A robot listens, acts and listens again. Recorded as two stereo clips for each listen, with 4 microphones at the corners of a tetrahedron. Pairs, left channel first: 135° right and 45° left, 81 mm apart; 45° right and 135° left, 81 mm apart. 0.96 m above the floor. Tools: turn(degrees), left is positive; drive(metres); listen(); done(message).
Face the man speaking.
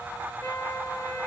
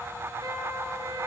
listen()
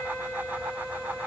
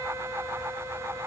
listen()
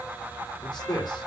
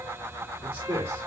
turn(degrees=-165)
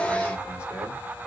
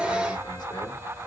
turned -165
listen()
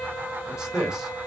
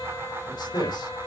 turn(degrees=-40)
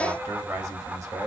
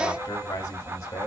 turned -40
done("Found it: a man speaking, straight ahead, 2 to 4 m away.")